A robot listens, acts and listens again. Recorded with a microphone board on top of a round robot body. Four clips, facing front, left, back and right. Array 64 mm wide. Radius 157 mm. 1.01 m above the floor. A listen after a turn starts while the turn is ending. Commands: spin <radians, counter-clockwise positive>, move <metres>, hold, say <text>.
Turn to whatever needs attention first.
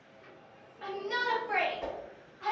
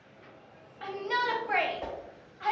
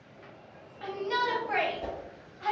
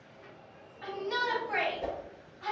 spin 1.75
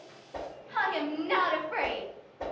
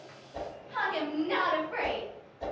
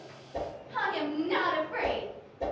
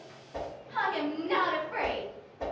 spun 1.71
say Facing the shout, 1 to 2 m away.